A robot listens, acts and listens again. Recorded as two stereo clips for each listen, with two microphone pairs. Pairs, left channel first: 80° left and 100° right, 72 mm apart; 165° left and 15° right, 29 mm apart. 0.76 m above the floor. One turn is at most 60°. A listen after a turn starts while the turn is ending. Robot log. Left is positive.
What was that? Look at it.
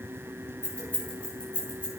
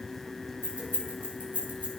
end: Facing the keys jangling.